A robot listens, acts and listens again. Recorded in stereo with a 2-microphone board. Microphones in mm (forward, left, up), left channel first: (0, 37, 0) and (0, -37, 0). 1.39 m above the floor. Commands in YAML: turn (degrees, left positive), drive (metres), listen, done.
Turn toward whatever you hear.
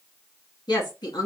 turn: 70
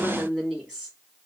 turn: -10
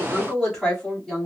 done: "Found it: a woman speaking, straight ahead."